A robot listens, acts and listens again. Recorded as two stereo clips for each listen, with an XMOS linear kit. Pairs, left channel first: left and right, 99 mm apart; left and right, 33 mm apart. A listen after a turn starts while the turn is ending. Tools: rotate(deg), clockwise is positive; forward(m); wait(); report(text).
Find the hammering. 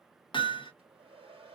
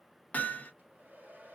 rotate(-55)
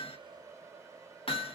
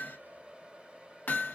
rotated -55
rotate(-70)
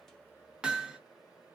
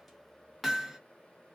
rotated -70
report("Found it: hammering, straight ahead.")